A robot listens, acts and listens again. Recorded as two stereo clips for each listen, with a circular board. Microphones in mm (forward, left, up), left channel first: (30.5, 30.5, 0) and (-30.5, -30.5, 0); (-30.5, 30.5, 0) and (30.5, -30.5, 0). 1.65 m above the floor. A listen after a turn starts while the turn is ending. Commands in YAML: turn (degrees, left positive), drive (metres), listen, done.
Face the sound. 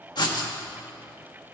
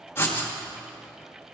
turn: 75
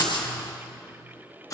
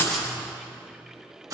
done: "Found it: writing, straight ahead."